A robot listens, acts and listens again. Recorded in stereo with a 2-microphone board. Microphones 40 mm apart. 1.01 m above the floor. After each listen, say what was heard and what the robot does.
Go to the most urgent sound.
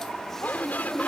The shout: about 45° left or 135° left. Turn 45° left.
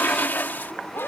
So it is at 85° left. Turn 85° left.
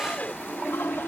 The shout is now 45° left. Turn 45° left.
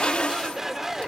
The shout is now 10° right. Turn 10° right.
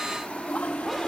Keep listening.
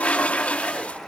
Keep listening.
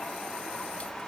I heard a shout from this way, but can't make it out now. I did not reach it.